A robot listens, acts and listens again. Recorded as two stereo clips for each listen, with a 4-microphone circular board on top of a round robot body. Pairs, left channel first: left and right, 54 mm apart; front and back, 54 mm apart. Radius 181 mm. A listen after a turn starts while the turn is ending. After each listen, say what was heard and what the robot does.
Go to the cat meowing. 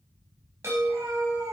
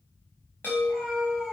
The cat meowing: 80° right. Turn 80° right.
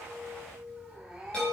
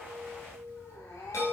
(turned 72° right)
The cat meowing is now 10° right. Turn 10° right.
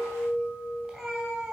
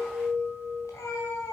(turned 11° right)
Drive 1.0 m forward.
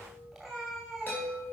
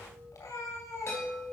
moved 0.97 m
Drive 1.0 m forward.
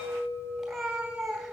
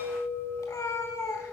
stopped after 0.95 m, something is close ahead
I am next to the cat meowing.